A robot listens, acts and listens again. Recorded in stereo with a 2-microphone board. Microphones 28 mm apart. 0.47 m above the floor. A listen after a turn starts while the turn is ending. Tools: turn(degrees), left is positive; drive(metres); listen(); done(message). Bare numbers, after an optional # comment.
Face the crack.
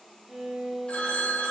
listen()
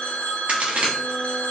# The crack: about 55° right or 125° right.
turn(-55)
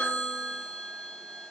listen()
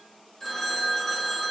done("I heard a crack, but can't make it out now. It was about straight ahead or 70° right.")